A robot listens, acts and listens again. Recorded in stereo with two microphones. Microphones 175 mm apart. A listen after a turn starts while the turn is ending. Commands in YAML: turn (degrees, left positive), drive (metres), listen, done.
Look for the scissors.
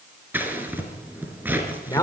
turn: -30
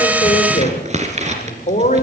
turn: -140
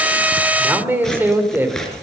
done: "Found it: scissors, straight ahead, 2 to 4 m away."